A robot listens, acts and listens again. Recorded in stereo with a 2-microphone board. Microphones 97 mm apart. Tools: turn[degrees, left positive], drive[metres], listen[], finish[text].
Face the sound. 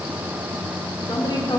Thought: The woman speaking: about 50° left or 130° left.
Action: turn[50]
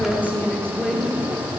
Action: finish[Found it: a woman speaking, straight ahead.]